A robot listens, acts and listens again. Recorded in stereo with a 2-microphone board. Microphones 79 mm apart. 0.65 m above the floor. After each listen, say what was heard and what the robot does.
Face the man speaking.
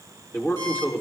The man speaking: about 25° left or 155° left. Turn 25° left.
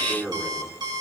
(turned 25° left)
So it is at 10° right. Turn 10° right.
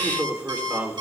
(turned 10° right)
The man speaking is now 25° right. Turn 25° right.
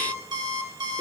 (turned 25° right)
Keep listening.
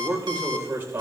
The man speaking is now 25° right. Turn 25° right.
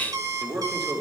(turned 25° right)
Found it: a man speaking, straight ahead, 2 to 4 m away.